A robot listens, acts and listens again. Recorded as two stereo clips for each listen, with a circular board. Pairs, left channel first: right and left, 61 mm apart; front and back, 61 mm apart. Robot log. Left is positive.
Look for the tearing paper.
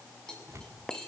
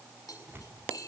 note: The tearing paper: 130° left.
cmd yaw +130
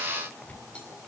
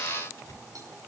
note: The tearing paper is now 25° right.
cmd yaw -25
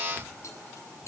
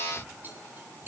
cmd idle
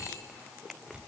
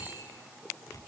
note: The tearing paper is now 15° left.
cmd yaw +15
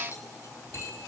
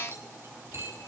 cmd idle
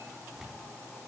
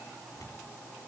note: The tearing paper is now 10° left.
cmd yaw +10
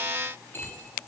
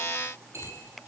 cmd idle
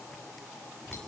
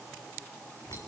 end: Found it: tearing paper, straight ahead, over 4 m away.